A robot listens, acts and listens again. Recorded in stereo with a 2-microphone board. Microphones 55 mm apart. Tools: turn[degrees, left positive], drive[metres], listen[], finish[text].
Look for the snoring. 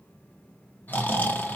Thought: The snoring: about 30° left or 150° left.
Action: turn[30]
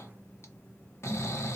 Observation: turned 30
Thought: So it is at 110° left.
Action: turn[110]
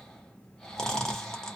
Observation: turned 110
Thought: The snoring is now 10° left.
Action: turn[10]
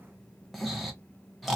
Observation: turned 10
Action: finish[Facing the snoring, under 1 m away.]